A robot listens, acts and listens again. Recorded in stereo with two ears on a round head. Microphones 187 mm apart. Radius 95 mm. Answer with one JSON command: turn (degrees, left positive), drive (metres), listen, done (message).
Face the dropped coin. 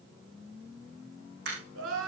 {"turn": -55}
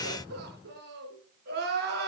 {"listen": true}
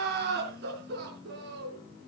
{"done": "I heard a dropped coin, but can't make it out now. It was about straight ahead or 70° right."}